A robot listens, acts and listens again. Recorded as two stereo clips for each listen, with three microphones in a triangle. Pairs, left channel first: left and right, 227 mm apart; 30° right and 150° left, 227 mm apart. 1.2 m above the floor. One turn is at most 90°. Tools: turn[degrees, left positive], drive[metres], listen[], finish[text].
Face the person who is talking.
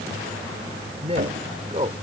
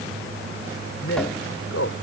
Thought: The man speaking: 25° right.
Action: turn[-25]
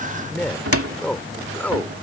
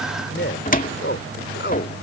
Action: finish[Found it: a man speaking, straight ahead.]